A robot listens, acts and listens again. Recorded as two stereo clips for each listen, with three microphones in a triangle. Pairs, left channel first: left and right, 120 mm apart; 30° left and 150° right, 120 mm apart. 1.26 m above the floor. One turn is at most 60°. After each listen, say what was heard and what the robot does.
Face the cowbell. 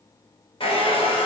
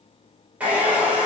Keep listening.
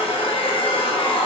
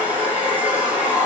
Keep listening.
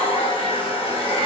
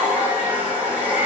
I can't make out a cowbell to turn to.